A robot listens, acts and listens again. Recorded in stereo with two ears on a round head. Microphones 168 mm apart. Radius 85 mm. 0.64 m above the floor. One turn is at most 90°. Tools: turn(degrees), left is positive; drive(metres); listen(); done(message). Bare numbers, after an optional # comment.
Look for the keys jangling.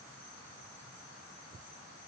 listen()
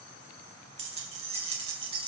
# The keys jangling: about 30° right or 150° right.
turn(-30)
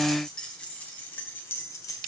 # So it is at 20° left.
turn(20)
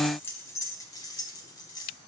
# The keys jangling is now 20° left.
turn(20)
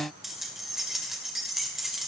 done("Facing the keys jangling, 1 to 2 m away.")